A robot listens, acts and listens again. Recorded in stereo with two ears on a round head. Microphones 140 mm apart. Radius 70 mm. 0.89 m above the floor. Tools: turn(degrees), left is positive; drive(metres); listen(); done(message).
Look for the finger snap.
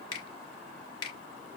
turn(degrees=25)
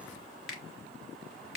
done("Facing the finger snap.")